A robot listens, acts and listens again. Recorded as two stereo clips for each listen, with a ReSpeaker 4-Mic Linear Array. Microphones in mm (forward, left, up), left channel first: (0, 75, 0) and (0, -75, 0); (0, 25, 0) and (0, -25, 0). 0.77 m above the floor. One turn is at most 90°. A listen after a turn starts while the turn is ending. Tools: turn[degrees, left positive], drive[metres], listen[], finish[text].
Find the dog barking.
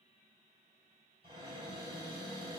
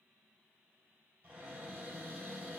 Action: listen[]
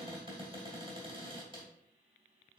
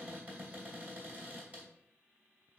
Action: listen[]
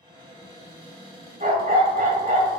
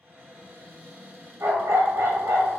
Thought: The dog barking: about 70° right or 110° right.
Action: turn[-70]
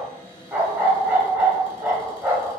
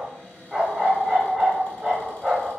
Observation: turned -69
Thought: So it is at 15° right.
Action: turn[-15]
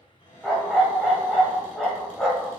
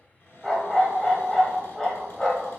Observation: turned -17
Action: finish[Facing the dog barking, 1 to 2 m away.]